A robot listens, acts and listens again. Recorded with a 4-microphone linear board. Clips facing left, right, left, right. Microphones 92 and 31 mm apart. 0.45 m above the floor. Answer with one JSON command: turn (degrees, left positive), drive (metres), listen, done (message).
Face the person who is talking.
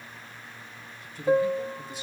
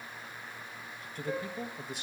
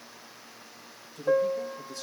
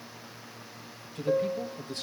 {"turn": -55}
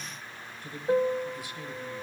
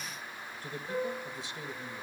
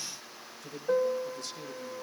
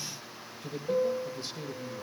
{"turn": -20}
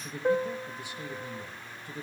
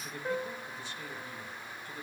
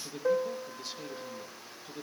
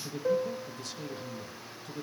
{"turn": 25}
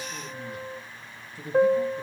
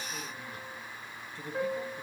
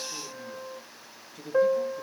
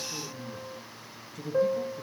{"turn": 10}
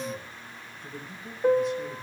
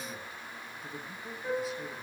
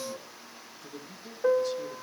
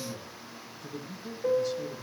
{"done": "Facing the man speaking."}